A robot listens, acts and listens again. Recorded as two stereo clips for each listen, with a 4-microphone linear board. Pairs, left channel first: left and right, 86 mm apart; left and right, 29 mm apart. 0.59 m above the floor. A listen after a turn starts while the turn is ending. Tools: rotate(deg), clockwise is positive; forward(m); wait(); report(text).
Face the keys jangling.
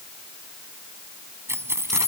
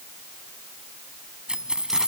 rotate(30)
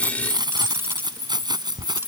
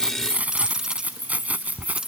rotate(125)
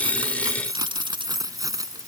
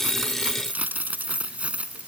rotate(45)
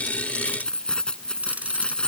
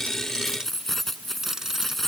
rotate(-10)
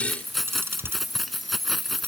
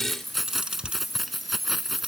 report("Found it: keys jangling, straight ahead.")